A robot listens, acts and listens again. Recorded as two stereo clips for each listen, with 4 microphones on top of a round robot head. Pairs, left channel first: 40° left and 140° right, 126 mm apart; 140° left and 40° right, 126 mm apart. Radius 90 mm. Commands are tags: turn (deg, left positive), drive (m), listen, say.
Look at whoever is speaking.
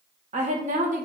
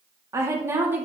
<turn deg="-115"/>
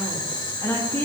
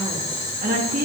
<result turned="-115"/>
<turn deg="-35"/>
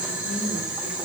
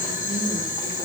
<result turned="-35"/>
<listen/>
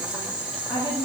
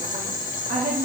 <turn deg="-15"/>
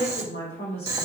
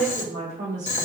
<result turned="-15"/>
<turn deg="-10"/>
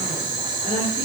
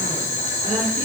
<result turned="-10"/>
<listen/>
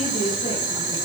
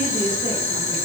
<say>Found it: a woman speaking, straight ahead, 2 to 4 m away.</say>